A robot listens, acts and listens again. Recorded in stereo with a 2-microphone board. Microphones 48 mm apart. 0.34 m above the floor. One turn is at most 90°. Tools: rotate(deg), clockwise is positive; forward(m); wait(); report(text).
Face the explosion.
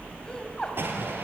rotate(50)
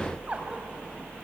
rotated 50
wait()
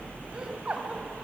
report("I heard an explosion, but can't make it out now. It was about straight ahead or 80° right.")